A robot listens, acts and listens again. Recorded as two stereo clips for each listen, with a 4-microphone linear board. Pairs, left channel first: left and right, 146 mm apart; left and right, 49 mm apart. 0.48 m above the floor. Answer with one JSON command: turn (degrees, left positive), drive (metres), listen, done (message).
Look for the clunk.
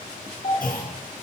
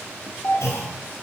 {"turn": 90}
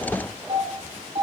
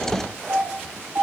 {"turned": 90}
{"done": "I heard a clunk from this way, but can't make it out now."}